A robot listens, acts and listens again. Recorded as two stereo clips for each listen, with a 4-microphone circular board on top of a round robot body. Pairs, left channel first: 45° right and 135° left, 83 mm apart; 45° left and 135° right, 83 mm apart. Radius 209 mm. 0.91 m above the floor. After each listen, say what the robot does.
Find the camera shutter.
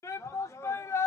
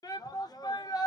Keep listening.
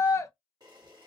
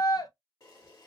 Turn 95° left.
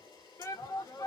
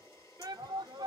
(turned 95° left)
Turn 10° right.
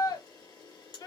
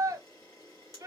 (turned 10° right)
Found it: a camera shutter, straight ahead, 1 to 2 m away.